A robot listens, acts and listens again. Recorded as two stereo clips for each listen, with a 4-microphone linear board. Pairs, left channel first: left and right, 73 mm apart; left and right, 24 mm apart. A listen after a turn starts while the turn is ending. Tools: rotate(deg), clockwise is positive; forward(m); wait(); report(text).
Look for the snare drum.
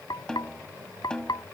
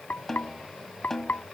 rotate(-30)
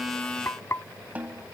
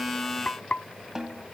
rotate(20)
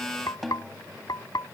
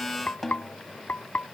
report("Facing the snare drum.")